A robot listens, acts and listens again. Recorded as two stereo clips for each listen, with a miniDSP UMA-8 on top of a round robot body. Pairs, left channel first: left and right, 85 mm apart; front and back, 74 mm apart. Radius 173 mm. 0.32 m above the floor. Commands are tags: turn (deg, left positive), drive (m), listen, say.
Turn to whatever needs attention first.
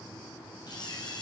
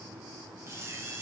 <listen/>
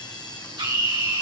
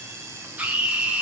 <turn deg="-110"/>
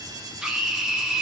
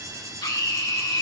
<say>Found it: a scream, straight ahead, 2 to 4 m away.</say>